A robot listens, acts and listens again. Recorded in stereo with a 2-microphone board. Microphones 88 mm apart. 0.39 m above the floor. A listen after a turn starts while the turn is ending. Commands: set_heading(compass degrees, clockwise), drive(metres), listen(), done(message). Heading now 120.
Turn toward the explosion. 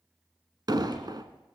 set_heading(170)
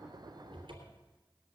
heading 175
listen()
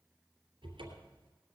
done("I heard an explosion, but can't make it out now. It was about 5° left or 75° right.")